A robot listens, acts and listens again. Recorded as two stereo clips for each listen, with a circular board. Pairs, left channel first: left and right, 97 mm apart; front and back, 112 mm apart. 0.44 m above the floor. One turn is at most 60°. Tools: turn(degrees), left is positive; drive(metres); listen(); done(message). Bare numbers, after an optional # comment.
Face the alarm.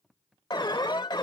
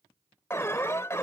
# The alarm: 60° left.
turn(60)
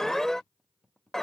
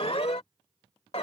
done("Found it: an alarm, straight ahead.")